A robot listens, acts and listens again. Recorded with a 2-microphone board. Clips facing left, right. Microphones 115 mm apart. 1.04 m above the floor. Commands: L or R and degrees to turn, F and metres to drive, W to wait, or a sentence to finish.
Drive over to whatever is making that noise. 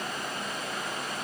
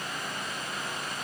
W
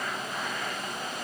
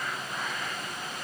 W
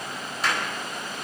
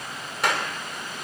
R90
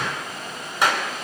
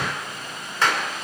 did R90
L15
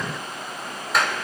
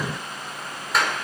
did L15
F1.0
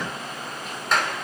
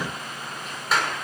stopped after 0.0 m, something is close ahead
Blocked. The clap is further on, straight ahead.